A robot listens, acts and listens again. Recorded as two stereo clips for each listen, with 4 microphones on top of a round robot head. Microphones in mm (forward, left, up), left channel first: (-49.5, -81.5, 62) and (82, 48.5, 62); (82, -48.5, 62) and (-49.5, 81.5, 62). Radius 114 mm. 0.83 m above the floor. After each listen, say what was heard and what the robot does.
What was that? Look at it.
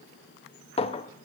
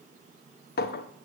The clink: 75° right. Turn 75° right.
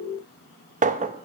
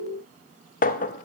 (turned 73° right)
Facing the clink.